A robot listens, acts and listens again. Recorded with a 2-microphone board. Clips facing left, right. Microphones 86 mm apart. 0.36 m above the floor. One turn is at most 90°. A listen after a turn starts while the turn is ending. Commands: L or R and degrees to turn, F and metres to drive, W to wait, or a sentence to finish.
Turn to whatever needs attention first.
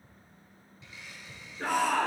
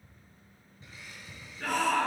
L40
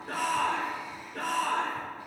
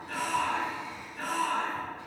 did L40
L90
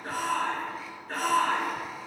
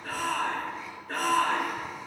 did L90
Found it: a shout, straight ahead, 2 to 4 m away.